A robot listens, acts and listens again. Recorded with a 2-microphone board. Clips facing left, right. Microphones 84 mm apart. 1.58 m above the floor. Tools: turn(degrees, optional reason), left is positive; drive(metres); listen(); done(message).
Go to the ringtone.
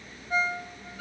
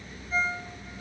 turn(degrees=90)
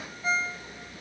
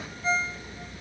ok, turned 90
turn(degrees=10, reason="So it is at 10° left.")
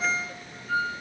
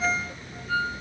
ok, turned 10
drive(metres=1.0)
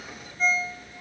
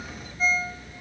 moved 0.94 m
drive(metres=1.0)
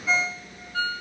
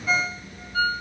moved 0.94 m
turn(degrees=-10, reason="The ringtone is now 10° right.")
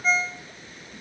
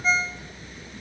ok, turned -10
drive(metres=1.0)
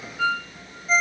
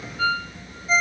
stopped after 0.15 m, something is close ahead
done("I am next to the ringtone.")